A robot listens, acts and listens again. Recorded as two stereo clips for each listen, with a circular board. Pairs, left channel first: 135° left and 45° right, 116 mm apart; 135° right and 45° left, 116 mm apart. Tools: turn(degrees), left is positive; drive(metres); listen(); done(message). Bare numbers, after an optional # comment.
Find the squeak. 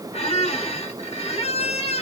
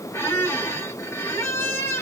# The squeak: 155° left.
turn(155)
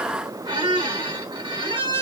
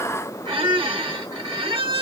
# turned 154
done("Facing the squeak.")